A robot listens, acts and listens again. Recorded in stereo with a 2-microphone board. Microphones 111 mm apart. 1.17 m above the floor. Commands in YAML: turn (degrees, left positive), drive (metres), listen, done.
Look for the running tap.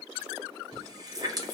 turn: -35
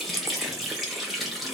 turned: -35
done: "Facing the running tap."